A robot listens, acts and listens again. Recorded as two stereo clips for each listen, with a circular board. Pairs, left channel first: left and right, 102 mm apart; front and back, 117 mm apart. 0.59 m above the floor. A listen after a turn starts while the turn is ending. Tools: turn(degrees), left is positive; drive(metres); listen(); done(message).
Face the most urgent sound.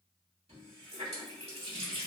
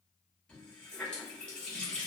listen()
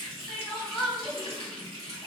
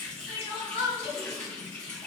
done("Facing the crying, under 1 m away.")